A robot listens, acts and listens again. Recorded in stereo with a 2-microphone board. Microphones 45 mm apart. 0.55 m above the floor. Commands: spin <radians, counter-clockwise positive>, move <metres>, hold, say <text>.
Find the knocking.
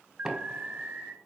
spin -0.52
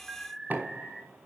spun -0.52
spin -2.36
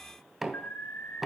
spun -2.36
spin -0.17
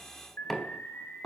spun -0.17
say Facing the knocking, 2 to 4 m away.